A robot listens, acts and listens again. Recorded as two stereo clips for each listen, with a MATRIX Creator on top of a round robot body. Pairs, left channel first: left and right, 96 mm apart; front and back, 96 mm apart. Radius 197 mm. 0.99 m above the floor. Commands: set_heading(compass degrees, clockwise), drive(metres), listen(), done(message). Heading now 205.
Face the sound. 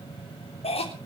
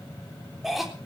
set_heading(110)
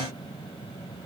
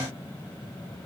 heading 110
listen()
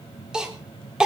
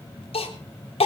done("Facing the cough, 2 to 4 m away.")